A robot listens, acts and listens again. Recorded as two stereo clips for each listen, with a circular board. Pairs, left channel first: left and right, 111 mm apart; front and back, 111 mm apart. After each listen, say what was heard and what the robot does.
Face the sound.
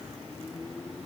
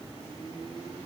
Keep listening.
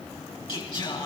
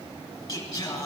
The singing: 60° left. Turn 60° left.
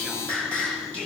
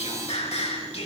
The singing is now 10° left. Turn 10° left.
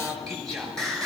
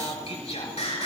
Found it: singing, straight ahead.